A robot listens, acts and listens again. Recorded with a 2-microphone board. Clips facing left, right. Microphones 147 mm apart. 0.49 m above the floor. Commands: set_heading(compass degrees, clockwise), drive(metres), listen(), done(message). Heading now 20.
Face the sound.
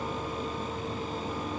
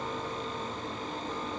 listen()
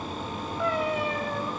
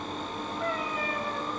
set_heading(290)
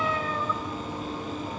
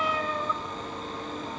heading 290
set_heading(300)
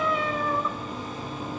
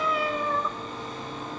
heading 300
done("Facing the cat meowing.")